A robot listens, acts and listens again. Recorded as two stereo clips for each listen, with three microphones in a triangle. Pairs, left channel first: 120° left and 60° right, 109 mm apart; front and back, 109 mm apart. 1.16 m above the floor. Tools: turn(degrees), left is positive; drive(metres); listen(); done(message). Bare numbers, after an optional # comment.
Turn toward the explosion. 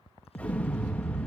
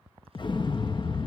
# The explosion: 45° left.
turn(45)
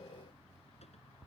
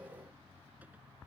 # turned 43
done("Facing where the explosion came from. I can't hear it now.")